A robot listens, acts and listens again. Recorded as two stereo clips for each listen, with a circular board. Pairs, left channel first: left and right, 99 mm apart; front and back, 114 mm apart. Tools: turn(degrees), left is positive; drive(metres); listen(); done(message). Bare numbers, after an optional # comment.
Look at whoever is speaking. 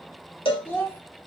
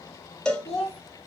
# The child speaking: 25° left.
turn(25)
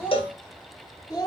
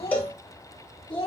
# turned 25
# The child speaking is now 40° left.
turn(40)
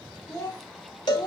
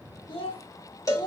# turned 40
# The child speaking is now 45° left.
turn(45)
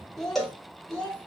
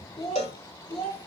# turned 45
# The child speaking is now 15° left.
turn(15)
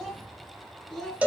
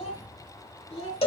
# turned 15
done("Found it: a child speaking, straight ahead, 2 to 4 m away.")